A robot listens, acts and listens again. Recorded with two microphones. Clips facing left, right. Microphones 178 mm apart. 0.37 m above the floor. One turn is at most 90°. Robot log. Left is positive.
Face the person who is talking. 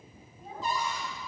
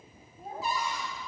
note: The child speaking: about 50° right or 130° right.
cmd yaw -50
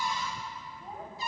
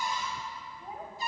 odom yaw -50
note: So it is at 10° right.
cmd yaw -10
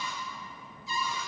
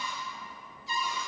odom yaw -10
cmd idle
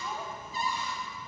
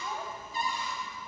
cmd idle
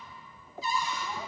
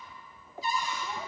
end: I heard a child speaking from this way, but can't make it out now.